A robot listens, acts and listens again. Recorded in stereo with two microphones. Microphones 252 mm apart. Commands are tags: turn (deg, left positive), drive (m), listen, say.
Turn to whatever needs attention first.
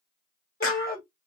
<turn deg="35"/>
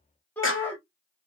<turn deg="10"/>
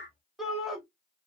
<say>Facing the shout, 1 to 2 m away.</say>